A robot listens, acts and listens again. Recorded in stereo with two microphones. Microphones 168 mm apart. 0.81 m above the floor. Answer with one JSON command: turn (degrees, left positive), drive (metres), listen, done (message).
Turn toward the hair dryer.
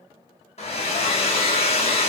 {"turn": 40}
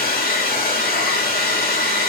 {"turn": 100}
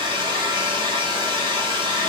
{"turn": -30}
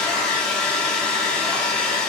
{"done": "Facing the hair dryer, under 1 m away."}